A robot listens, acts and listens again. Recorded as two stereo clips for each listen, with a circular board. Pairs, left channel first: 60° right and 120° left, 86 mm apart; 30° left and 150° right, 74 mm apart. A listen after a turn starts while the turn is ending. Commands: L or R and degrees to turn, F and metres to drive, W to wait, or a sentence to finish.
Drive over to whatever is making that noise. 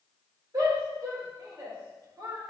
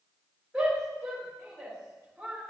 L125
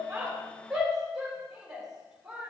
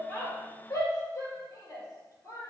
L35
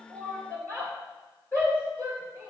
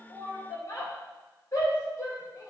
F1.0
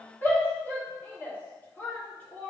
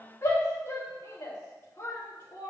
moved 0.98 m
F1.0
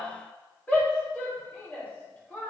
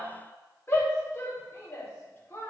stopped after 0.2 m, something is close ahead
Arrived at the shout, straight ahead.